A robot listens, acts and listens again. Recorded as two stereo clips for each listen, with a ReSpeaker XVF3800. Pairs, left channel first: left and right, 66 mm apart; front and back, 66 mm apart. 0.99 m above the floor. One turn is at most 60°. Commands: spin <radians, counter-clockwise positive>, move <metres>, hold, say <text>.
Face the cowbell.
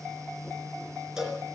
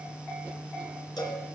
spin -0.17
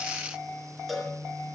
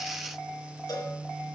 say Found it: a cowbell, straight ahead.